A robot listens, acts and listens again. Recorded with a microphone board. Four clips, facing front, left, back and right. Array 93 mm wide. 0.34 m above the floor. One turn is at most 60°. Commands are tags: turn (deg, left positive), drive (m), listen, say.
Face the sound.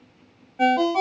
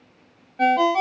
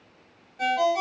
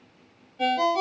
<turn deg="60"/>
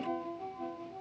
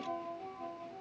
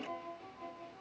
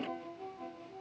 <listen/>
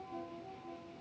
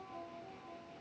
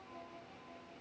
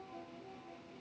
<listen/>
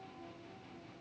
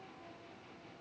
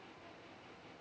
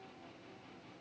<say>I heard a ringtone from this way, but can't make it out now.</say>